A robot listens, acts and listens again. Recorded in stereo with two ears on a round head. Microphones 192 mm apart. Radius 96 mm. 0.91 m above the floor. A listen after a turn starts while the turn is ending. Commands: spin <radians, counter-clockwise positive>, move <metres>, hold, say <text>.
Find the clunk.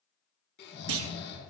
spin -1.31
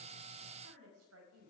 hold
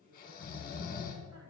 say I heard a clunk, but can't make it out now. It was about straight ahead or 30° right.